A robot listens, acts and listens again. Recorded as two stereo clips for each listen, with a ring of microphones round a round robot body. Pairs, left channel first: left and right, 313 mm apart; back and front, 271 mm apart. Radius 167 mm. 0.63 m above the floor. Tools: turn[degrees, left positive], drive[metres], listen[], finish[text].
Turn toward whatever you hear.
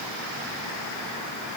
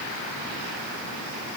Action: listen[]
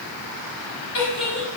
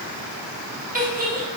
Thought: The giggle: 60° left.
Action: turn[60]
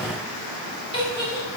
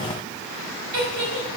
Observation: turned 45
Thought: The giggle is now 15° left.
Action: turn[15]
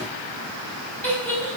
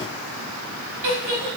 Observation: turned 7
Action: finish[Found it: a giggle, straight ahead, over 4 m away.]